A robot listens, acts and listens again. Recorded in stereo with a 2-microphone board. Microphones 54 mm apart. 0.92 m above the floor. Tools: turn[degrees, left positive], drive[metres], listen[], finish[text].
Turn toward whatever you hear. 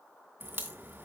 Thought: The crack: about 40° right or 140° right.
Action: turn[-40]
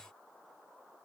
Action: listen[]
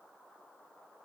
Action: finish[I heard a crack, but can't make it out now. It was about straight ahead or 100° right.]